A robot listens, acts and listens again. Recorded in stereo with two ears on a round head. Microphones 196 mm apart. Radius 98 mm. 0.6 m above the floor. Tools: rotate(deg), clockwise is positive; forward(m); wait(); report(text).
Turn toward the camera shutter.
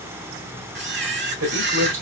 rotate(55)
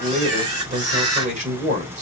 rotate(70)
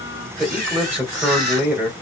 rotate(40)
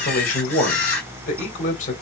report("Facing the camera shutter, 2 to 4 m away.")